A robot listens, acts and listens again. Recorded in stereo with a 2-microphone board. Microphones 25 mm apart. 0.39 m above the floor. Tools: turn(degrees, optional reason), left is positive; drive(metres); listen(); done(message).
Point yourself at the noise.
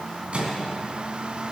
turn(degrees=-50, reason="The microwave: about 50° right or 130° right.")
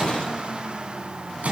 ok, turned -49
turn(degrees=-80, reason="So it is at 80° right.")
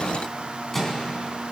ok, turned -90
turn(degrees=10, reason="The microwave is now 10° left.")
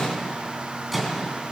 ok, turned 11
done("Facing the microwave.")